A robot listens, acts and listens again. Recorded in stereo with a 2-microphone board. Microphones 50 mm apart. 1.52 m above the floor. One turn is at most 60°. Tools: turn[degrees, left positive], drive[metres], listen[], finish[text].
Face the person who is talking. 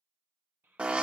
Thought: The child speaking: about 45° right or 135° right.
Action: turn[-45]
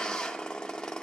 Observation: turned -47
Action: listen[]
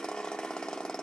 Action: listen[]
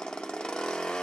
Action: finish[I heard a child speaking, but can't make it out now. It was about 5° left or 90° right.]